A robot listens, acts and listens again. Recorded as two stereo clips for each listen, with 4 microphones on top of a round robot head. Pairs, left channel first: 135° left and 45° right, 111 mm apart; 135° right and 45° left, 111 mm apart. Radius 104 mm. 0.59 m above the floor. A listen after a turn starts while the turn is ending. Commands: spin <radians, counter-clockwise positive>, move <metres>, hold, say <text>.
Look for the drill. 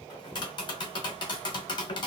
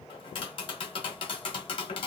hold
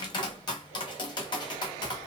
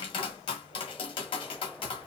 hold
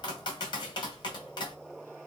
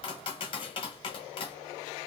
say I can't make out a drill to turn to.